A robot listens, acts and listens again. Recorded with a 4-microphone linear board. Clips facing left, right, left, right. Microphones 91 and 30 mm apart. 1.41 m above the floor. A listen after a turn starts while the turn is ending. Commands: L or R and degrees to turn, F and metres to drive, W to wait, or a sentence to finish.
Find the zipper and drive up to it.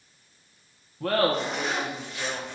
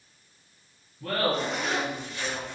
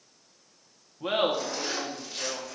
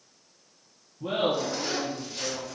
L30
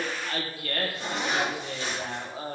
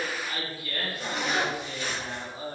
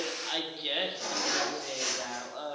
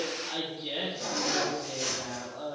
L150
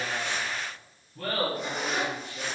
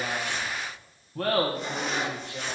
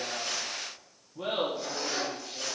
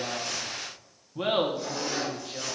F1.0
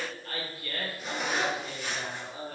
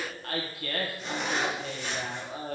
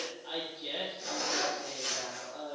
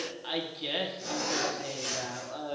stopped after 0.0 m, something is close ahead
Blocked. The zipper is further on, straight ahead.